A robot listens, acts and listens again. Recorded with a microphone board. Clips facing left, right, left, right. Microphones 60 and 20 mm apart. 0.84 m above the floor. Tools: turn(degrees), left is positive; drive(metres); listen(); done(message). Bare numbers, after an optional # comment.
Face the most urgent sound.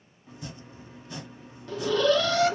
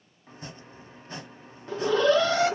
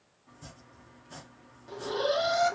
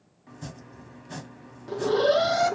# The alarm: about 25° right or 155° right.
turn(-25)
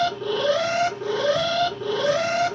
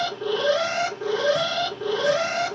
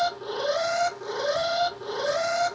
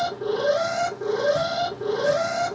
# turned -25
done("Facing the alarm.")